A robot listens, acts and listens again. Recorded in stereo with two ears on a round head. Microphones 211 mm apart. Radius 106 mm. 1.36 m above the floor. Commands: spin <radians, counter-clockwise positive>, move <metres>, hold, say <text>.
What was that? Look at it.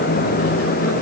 hold
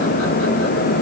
hold
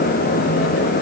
say I can't make out anything to turn to.